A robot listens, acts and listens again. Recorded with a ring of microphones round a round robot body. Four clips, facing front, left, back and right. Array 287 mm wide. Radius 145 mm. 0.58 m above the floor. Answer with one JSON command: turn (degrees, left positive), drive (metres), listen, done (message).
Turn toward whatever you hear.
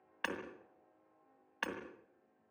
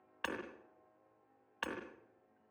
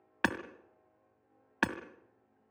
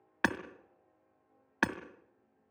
{"turn": -130}
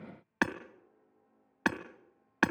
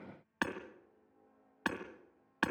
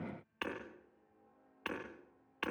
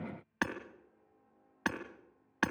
{"done": "Facing the hammering."}